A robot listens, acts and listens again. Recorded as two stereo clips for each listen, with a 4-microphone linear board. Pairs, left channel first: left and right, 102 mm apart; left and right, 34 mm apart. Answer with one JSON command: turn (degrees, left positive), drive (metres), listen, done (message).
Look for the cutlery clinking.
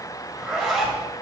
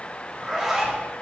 {"listen": true}
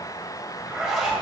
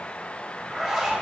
{"listen": true}
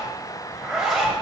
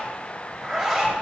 {"done": "I can't make out cutlery clinking to turn to."}